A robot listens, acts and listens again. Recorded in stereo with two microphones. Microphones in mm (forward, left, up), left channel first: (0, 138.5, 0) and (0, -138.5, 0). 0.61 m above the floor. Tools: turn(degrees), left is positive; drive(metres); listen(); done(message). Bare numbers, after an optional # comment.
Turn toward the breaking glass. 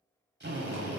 listen()
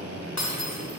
# The breaking glass: about 65° left or 115° left.
turn(65)
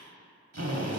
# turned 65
listen()
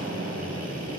done("I heard breaking glass, but can't make it out now. It was about straight ahead or 50° left.")